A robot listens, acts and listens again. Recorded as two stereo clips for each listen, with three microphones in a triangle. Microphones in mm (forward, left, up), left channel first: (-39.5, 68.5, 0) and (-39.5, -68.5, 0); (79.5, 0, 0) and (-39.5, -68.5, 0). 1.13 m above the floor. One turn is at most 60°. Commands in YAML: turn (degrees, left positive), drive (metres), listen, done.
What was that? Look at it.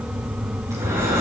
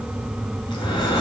turn: -25
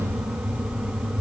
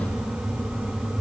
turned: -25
listen: true
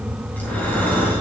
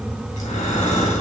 turn: 15
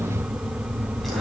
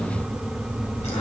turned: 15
listen: true
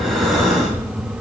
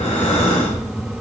done: "Facing the breathing, 2 to 4 m away."